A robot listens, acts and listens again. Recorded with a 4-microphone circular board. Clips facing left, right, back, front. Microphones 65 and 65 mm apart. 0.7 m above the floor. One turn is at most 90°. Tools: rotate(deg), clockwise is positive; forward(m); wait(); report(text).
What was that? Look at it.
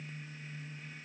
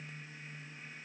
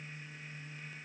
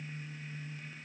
wait()
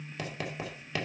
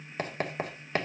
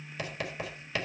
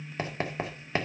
rotate(50)
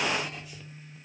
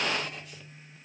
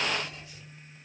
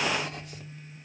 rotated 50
wait()
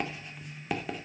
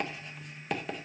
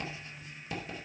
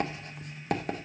report("Found it: writing, straight ahead, 2 to 4 m away.")